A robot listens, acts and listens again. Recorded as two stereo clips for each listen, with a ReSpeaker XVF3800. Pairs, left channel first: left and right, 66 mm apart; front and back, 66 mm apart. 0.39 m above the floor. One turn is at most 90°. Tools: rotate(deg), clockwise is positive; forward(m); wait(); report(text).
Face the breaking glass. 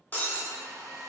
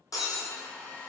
rotate(-25)
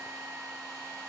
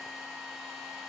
report("Facing where the breaking glass came from. I can't hear it now.")